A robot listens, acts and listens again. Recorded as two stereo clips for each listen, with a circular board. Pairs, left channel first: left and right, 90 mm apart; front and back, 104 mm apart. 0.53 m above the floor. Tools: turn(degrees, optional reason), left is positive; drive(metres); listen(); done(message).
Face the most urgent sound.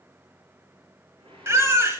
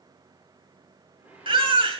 turn(degrees=-150, reason="The baby crying: 150° right.")
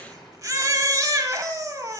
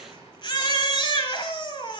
turn(degrees=-40, reason="The baby crying is now 40° right.")
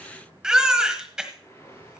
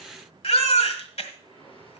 turn(degrees=-10, reason="The baby crying is now 10° right.")
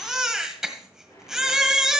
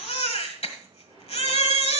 done("Found it: a baby crying, straight ahead, 1 to 2 m away.")